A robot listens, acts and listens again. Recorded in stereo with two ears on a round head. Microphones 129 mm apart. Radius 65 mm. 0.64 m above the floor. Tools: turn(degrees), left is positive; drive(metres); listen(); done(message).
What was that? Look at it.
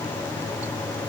listen()
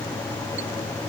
listen()
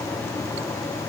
done("I can't make out anything to turn to.")